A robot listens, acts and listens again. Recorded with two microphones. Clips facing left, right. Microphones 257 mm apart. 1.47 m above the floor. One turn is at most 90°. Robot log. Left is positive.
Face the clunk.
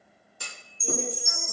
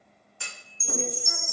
note: The clunk: about 40° left or 140° left.
cmd yaw +40
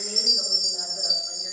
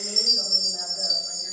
cmd idle
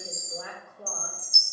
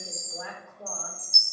end: I heard a clunk, but can't make it out now. It was about straight ahead or 100° left.